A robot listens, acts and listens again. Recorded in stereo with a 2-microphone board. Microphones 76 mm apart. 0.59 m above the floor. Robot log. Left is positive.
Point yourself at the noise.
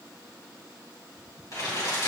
note: The crumpling: about 55° left or 125° left.
cmd yaw +55
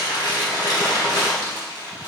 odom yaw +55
note: So it is at 70° left.
cmd yaw +70
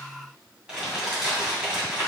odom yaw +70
note: The crumpling is now 15° right.
cmd yaw -15
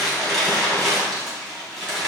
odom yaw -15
end: Facing the crumpling, 2 to 4 m away.